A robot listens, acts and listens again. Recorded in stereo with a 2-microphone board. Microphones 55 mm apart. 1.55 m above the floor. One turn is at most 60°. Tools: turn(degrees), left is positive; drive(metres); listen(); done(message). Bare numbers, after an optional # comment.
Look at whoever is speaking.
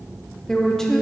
turn(30)
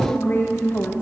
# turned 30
# So it is at 140° left.
turn(60)
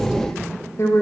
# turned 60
# The woman speaking is now 55° left.
turn(55)
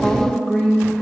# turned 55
# The woman speaking is now 15° left.
turn(15)
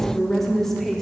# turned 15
done("Facing the woman speaking.")